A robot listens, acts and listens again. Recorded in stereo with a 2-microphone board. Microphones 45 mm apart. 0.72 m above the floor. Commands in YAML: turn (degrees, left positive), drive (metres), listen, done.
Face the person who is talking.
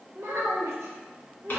turn: -90
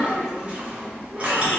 listen: true
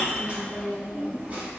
listen: true
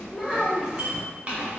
done: "Facing the child speaking, under 1 m away."